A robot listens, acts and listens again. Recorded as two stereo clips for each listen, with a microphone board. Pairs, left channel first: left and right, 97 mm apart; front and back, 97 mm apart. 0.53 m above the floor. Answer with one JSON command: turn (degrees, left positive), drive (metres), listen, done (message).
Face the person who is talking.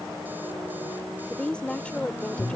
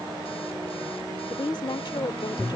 {"turn": 15}
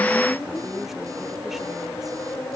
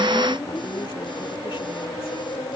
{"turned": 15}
{"listen": true}
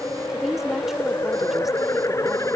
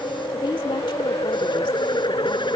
{"listen": true}
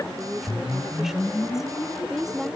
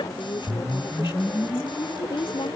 {"done": "Facing the woman speaking."}